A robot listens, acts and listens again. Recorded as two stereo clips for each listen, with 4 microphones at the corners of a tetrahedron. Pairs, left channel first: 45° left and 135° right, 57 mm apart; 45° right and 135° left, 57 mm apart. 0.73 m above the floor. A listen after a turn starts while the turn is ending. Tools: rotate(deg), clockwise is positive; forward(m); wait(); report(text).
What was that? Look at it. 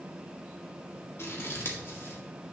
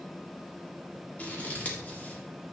rotate(-15)
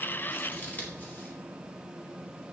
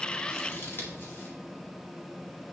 report("Facing the scissors, 1 to 2 m away.")